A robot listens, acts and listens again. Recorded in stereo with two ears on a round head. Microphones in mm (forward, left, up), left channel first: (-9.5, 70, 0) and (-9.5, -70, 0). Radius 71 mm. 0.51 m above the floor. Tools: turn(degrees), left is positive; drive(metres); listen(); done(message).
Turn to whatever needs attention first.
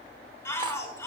turn(degrees=15)
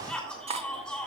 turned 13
done("Facing the shout.")